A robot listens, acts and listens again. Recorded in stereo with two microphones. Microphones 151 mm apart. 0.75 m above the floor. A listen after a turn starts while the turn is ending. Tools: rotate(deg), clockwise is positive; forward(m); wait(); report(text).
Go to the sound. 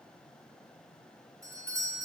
rotate(20)
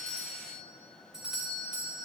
forward(1.0)
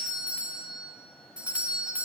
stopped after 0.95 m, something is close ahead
rotate(10)
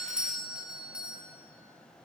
report("Arrived at the doorbell, straight ahead.")